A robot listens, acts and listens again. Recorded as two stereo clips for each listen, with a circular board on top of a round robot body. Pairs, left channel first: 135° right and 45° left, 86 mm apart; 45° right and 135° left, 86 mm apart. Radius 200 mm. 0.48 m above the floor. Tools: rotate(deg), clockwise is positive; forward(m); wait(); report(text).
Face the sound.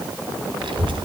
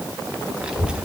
rotate(-55)
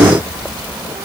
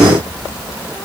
rotate(-20)
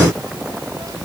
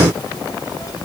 report("Facing the child speaking.")